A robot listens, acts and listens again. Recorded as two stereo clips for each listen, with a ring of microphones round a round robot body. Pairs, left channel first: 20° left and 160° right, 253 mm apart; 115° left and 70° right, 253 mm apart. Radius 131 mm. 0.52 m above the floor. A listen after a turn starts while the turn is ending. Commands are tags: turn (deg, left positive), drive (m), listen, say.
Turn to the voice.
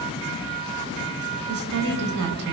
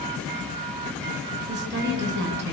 <turn deg="-115"/>
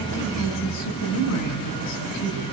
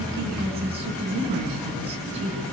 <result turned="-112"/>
<say>Facing the woman speaking, over 4 m away.</say>